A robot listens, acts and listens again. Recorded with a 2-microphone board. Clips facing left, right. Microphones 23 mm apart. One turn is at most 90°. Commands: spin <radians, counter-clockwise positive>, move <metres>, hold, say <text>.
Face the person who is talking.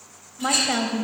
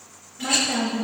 spin 0.61
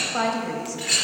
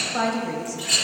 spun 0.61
spin 0.17
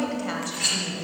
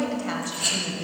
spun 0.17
say Facing the woman speaking.